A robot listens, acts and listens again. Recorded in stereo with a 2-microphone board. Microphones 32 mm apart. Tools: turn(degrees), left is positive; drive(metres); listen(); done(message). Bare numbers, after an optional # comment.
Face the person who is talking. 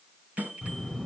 turn(30)
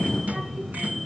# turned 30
# So it is at 35° right.
turn(-35)
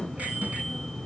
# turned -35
done("Found it: a child speaking, straight ahead.")